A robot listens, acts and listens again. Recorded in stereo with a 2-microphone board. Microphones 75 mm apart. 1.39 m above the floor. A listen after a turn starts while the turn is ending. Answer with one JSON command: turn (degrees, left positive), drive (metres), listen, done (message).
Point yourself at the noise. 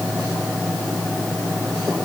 {"listen": true}
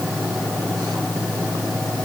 {"listen": true}
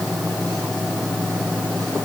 {"done": "I can't make out anything to turn to."}